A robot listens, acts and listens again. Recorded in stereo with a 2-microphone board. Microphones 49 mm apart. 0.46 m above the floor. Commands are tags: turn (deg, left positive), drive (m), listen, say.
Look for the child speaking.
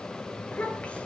<turn deg="25"/>
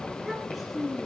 <say>Found it: a child speaking, straight ahead, over 4 m away.</say>